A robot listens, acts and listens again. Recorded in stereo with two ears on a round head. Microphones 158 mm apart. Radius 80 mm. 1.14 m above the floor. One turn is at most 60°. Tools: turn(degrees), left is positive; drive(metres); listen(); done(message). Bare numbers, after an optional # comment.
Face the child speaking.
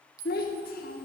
# The child speaking: about 55° left or 125° left.
turn(55)
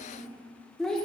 done("Found it: a child speaking, straight ahead, 1 to 2 m away.")